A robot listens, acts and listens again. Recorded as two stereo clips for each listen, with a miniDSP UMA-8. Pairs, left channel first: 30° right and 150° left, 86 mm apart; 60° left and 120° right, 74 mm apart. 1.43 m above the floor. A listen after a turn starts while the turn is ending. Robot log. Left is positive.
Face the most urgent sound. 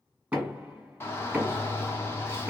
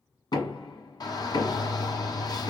note: The shout: 30° left.
cmd yaw +30
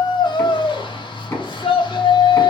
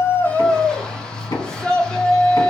note: The shout is now 20° right.
cmd yaw -20
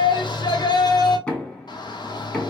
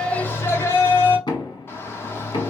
end: Facing the shout.